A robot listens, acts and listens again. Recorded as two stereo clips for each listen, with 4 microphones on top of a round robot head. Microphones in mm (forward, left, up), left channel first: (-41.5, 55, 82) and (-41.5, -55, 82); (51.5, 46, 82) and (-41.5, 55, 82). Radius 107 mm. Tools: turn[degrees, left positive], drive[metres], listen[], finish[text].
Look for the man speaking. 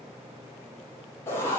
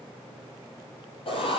Action: listen[]
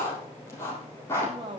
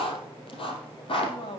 Thought: The man speaking: 40° right.
Action: turn[-40]
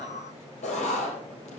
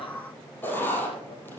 Action: listen[]
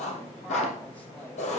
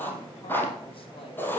Action: listen[]
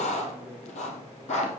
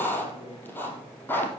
Action: finish[Facing where the man speaking came from. I can't hear it now.]